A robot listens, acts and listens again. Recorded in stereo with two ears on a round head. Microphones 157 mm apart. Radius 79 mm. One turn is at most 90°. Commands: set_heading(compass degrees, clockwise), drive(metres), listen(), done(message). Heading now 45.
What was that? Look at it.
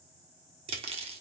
set_heading(80)
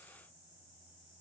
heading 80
listen()
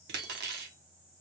set_heading(170)
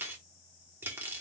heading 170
set_heading(185)
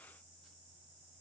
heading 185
listen()
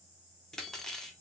done("Found it: cutlery clinking, straight ahead.")